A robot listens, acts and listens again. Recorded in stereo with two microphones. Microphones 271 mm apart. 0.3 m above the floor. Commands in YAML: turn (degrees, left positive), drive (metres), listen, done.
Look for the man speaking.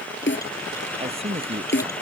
turn: -20
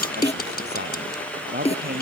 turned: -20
turn: -35
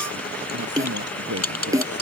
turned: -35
turn: -115
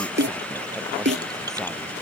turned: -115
listen: true
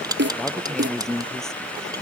done: "Found it: a man speaking, straight ahead."